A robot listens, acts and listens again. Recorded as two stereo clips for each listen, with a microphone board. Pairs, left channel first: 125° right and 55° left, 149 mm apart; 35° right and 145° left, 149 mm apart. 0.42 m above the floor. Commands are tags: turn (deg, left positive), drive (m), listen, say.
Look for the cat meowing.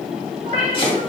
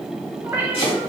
<turn deg="75"/>
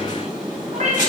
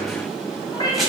<turn deg="25"/>
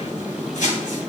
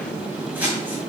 <listen/>
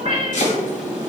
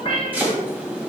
<turn deg="15"/>
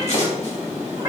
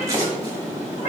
<say>Facing the cat meowing, 2 to 4 m away.</say>